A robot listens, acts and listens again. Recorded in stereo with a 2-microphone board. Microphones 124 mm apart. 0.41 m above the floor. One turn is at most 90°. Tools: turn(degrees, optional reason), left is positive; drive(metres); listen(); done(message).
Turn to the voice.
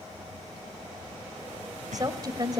turn(degrees=-30, reason="The woman speaking: about 30° right or 150° right.")
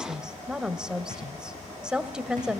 done("Found it: a woman speaking, straight ahead, 1 to 2 m away.")